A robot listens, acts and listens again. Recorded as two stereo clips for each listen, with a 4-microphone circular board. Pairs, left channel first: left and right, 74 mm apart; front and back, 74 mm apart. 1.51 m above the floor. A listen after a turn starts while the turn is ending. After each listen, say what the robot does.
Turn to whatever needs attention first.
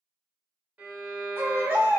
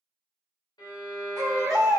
Turn 145° right.
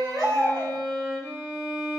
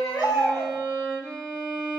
Keep listening.
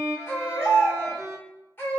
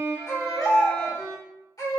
Turn 35° left.
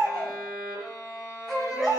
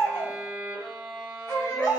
Facing the baby crying.